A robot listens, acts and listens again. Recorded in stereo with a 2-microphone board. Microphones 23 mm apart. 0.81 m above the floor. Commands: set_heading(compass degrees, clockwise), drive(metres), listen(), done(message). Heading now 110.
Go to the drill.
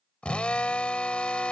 set_heading(50)
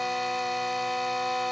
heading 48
drive(1.0)
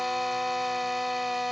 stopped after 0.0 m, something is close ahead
done("Something is in my way. I am facing the drill but have not reached it.")